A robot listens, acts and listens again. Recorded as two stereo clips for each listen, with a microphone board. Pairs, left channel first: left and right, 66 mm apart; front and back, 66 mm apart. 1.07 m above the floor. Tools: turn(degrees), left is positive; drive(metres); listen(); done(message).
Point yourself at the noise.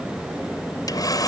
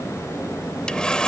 turn(degrees=75)
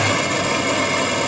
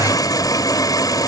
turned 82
done("Facing the sawing.")